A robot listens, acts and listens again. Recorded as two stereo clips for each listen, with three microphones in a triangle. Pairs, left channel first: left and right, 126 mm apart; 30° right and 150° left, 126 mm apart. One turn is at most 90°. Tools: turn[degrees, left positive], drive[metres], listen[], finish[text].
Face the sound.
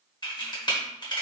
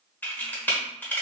Thought: The camera shutter: 45° left.
Action: turn[45]
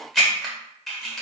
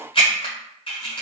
Action: finish[Found it: a camera shutter, straight ahead.]